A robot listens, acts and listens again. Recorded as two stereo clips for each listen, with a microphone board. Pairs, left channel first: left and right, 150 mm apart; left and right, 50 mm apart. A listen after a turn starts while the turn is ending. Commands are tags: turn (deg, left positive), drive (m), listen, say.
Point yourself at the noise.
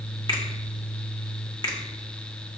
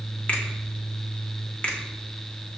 <turn deg="25"/>
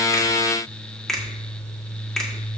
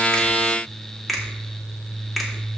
<say>Found it: a finger snap, straight ahead.</say>